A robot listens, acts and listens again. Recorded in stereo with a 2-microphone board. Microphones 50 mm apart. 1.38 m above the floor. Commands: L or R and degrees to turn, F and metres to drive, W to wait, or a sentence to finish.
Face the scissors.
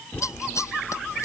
L90
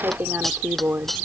Facing the scissors.